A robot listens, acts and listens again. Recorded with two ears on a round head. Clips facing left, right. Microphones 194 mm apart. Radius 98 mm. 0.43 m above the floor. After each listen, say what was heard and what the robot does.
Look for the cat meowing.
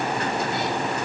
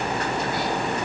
Keep listening.
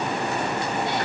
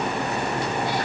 Keep listening.
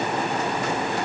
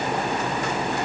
I can't make out a cat meowing.